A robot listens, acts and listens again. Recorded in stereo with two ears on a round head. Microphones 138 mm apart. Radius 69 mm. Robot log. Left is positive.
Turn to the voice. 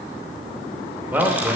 cmd yaw -30
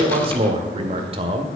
note: So it is at 135° right.
cmd yaw -135
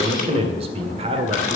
note: The man speaking is now 45° right.
cmd yaw -45
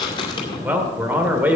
note: The man speaking is now 10° right.
cmd yaw -10
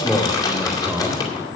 end: Facing the man speaking, 1 to 2 m away.